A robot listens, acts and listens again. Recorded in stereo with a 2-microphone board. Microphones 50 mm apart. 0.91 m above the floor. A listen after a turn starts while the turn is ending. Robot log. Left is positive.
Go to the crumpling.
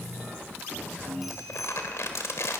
note: The crumpling: about 65° left or 115° left.
cmd yaw +65
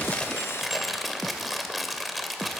cmd fwd 1.0
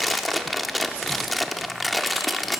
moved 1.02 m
cmd fwd 1.0
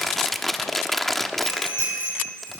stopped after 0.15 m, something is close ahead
end: Arrived at the crumpling, straight ahead.